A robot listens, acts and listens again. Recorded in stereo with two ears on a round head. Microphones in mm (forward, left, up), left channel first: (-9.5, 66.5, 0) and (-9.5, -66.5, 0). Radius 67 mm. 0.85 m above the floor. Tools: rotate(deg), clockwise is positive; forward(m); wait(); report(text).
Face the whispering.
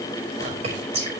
rotate(40)
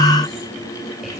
wait()
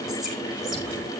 wait()
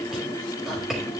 report("Facing the whispering.")